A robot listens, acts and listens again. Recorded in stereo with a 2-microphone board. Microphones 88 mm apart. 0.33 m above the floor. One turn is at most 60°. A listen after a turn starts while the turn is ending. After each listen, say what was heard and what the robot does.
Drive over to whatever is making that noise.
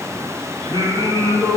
The singing: about 70° right or 110° right. Turn 60° right.
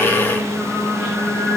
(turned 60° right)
So it is at 10° right. Turn 10° right.
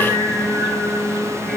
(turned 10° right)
Drive 1.0 m forward.
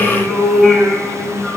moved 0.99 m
The singing is now 10° right. Turn 10° right.
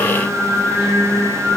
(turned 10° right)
Drive 1.0 m forward.
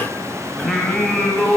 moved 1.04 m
Drive 1.0 m forward.
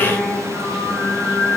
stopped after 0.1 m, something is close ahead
Arrived at the singing, straight ahead.